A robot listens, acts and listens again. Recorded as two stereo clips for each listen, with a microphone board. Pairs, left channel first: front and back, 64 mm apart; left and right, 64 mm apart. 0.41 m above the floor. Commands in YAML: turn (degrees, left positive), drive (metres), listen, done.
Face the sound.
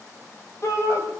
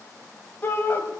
turn: 30
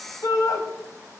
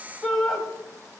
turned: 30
done: "Facing the shout, 2 to 4 m away."